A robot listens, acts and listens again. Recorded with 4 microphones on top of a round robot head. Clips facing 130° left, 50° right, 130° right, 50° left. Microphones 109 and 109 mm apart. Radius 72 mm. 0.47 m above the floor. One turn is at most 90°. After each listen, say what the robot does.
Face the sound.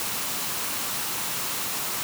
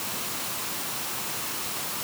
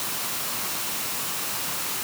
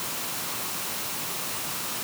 Keep listening.
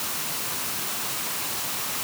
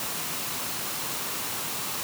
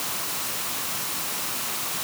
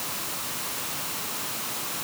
Keep listening.
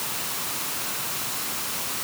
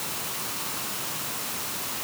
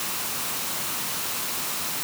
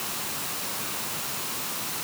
I can't make out anything to turn to.